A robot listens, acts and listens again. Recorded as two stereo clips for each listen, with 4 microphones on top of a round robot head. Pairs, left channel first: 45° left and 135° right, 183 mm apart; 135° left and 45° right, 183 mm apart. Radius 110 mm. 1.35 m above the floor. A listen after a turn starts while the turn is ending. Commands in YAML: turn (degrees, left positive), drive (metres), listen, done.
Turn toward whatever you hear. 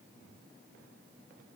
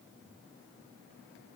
listen: true
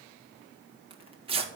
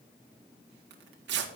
turn: -75
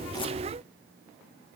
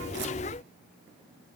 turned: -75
listen: true
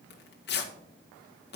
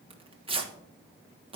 turn: 15
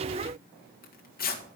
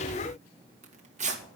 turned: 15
done: "Facing the tearing paper, 1 to 2 m away."